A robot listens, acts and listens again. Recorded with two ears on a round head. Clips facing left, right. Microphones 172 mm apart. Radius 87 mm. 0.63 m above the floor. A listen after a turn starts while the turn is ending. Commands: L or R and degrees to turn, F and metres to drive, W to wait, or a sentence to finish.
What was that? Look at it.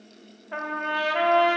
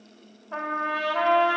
L20
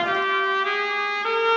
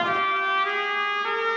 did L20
L140
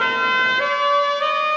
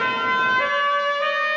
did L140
L45
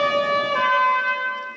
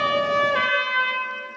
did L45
R20
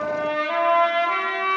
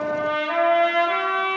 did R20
Found it: a trumpet, straight ahead.